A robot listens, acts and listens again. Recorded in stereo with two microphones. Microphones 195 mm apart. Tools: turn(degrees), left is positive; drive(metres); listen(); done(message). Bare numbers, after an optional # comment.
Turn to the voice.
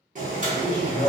# The man speaking: about 50° right or 130° right.
turn(-50)
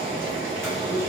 listen()
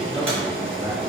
# So it is at 10° right.
turn(-10)
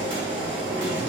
listen()
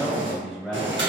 done("Facing the man speaking.")